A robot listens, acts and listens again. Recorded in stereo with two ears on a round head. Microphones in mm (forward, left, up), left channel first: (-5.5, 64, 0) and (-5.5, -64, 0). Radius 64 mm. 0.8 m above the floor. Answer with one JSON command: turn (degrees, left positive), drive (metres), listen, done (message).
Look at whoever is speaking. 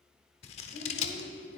{"turn": 90}
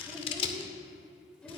{"turn": 10}
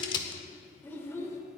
{"turn": 20}
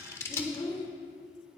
{"turn": 30}
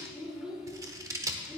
{"done": "Facing the child speaking."}